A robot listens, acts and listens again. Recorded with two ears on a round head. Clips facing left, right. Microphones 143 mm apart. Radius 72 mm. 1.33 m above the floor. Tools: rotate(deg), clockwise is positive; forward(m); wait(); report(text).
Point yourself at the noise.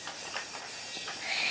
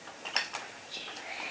wait()
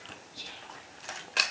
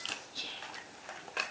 rotate(90)
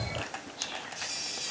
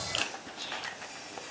wait()
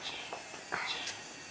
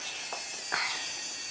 wait()
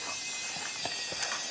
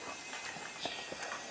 report("Facing where the whispering came from. I can't hear it now.")